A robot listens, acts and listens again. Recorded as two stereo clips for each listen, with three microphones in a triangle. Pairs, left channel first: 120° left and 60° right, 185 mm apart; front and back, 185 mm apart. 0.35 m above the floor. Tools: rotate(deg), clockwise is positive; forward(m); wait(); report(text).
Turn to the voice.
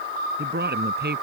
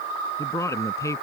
rotate(70)
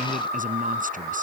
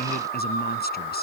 rotate(25)
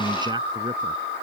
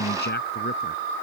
report("Found it: a man speaking, straight ahead.")